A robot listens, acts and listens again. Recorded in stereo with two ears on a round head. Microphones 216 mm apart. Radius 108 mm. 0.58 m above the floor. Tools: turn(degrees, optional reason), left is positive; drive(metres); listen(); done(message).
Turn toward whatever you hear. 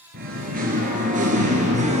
turn(degrees=-30, reason="The singing: about 30° right or 150° right.")
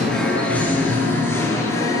turn(degrees=15, reason="So it is at 15° left.")
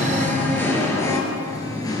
turn(degrees=15, reason="The singing is now 15° left.")
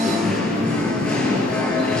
done("Found it: singing, straight ahead.")